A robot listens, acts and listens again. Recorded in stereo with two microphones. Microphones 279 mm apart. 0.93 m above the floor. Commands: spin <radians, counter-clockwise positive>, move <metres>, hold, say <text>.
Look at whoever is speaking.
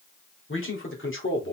spin 0.79
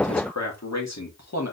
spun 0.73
spin 2.01
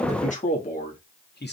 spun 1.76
spin 0.70
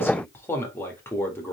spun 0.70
spin 0.17
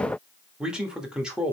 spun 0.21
say Found it: a man speaking, straight ahead.